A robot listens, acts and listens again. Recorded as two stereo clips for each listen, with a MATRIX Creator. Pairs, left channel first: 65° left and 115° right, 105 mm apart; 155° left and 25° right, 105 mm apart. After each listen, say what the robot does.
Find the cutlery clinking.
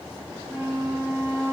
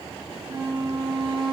Keep listening.
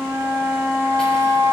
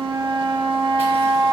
Keep listening.
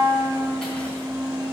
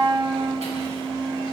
I can't make out cutlery clinking to turn to.